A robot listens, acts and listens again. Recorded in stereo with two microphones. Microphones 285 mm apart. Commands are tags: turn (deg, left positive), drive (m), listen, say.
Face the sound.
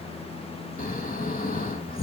<turn deg="30"/>
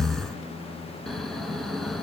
<say>Found it: snoring, straight ahead.</say>